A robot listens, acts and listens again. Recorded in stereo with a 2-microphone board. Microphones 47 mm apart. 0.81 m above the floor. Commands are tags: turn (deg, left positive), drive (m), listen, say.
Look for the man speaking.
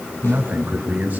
<turn deg="-30"/>
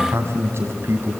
<turn deg="-120"/>
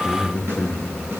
<turn deg="25"/>
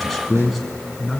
<say>Facing the man speaking.</say>